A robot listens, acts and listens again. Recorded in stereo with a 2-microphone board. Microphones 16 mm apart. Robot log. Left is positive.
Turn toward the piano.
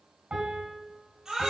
cmd yaw -90
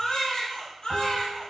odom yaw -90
cmd idle
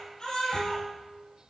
end: Found it: a piano, straight ahead, 2 to 4 m away.